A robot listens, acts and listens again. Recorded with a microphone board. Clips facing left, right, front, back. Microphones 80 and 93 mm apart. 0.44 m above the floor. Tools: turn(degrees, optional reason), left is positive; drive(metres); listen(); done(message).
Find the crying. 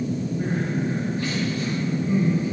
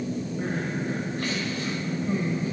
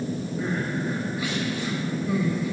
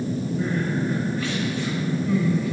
turn(degrees=-75, reason="The crying: 75° right.")
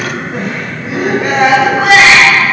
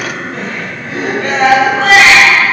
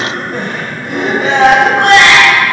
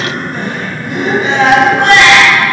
turn(degrees=10, reason="The crying is now 10° left.")
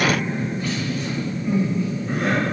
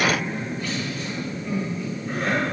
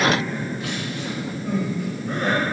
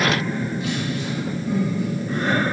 done("Found it: crying, straight ahead, 1 to 2 m away.")